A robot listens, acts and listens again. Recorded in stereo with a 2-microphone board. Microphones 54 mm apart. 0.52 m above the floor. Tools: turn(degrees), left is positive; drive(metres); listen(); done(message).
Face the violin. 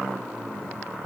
listen()
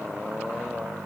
listen()
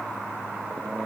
done("I can't make out a violin to turn to.")